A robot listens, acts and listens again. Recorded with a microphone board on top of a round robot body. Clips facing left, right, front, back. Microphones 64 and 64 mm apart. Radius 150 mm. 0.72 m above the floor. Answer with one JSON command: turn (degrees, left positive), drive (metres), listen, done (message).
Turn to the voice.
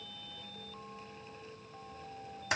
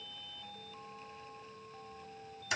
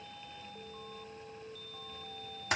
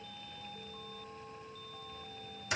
{"listen": true}
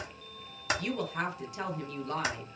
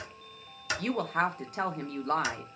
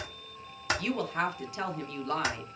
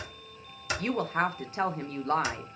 {"turn": -125}
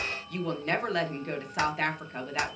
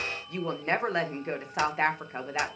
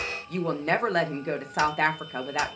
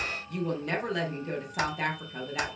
{"turn": -30}
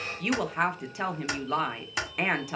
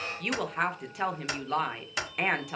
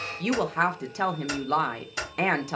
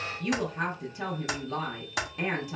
{"done": "Facing the woman speaking, under 1 m away."}